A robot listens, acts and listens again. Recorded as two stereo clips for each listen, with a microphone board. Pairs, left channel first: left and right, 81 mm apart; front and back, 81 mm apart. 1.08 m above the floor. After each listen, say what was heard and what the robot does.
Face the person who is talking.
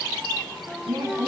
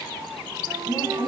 The woman speaking: 60° right. Turn 60° right.
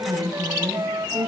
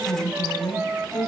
Facing the woman speaking, over 4 m away.